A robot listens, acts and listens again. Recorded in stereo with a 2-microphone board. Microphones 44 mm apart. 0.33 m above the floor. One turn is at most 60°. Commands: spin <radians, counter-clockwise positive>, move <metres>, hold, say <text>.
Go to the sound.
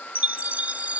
spin -0.52
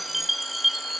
move 1.0
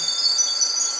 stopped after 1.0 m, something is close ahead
say Arrived at the chime, straight ahead.